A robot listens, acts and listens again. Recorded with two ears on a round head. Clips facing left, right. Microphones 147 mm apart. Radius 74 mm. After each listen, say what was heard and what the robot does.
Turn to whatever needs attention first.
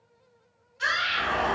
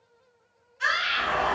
The scream: about 40° left or 140° left. Turn 40° left.
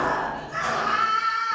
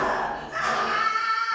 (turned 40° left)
So it is at 90° left. Turn 90° left.
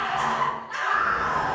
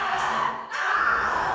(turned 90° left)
Facing the scream, 1 to 2 m away.